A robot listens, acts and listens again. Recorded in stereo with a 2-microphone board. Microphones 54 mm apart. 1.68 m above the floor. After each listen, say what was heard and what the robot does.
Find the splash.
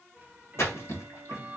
The splash: about 60° left or 120° left. Turn 60° left.
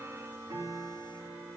Keep listening.
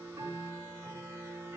I heard a splash, but can't make it out now. It was about straight ahead or 60° left.